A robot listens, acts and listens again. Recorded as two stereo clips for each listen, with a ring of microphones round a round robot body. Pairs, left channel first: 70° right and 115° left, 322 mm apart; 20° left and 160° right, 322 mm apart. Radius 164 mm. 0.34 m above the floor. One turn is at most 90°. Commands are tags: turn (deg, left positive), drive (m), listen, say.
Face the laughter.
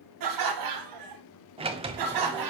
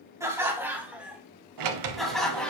<turn deg="90"/>
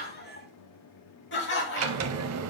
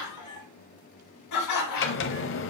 <turn deg="-10"/>
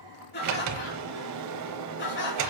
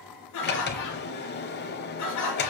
<turn deg="-10"/>
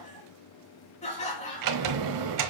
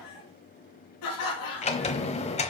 <say>Facing the laughter.</say>